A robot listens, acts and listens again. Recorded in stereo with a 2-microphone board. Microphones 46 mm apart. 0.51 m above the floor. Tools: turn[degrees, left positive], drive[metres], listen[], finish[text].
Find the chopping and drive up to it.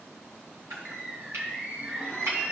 Action: turn[-90]
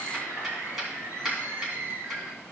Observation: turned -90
Action: drive[1.0]
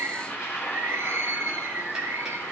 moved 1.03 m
Action: listen[]
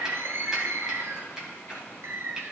Action: drive[1.0]
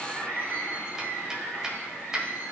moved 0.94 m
Thought: The chopping is now 10° right.
Action: turn[-10]
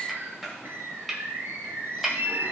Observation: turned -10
Action: drive[1.0]
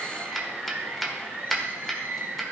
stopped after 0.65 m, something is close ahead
Action: finish[Arrived at the chopping, straight ahead.]